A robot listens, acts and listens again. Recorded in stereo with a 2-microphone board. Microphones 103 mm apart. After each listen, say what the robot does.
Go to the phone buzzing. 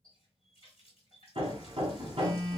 Turn 35° right.
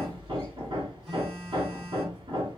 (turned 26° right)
Keep listening.
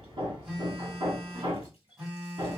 Turn 10° right.
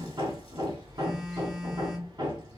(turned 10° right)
Drive 1.0 m forward.
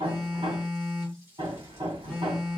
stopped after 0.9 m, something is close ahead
I am next to the phone buzzing.